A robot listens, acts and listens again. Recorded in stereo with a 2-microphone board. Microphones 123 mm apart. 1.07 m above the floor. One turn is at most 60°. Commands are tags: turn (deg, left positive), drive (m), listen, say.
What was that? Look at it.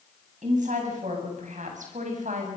<turn deg="-60"/>
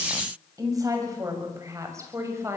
<turn deg="-20"/>
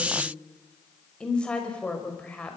<turn deg="10"/>
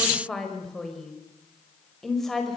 <say>Found it: a woman speaking, straight ahead.</say>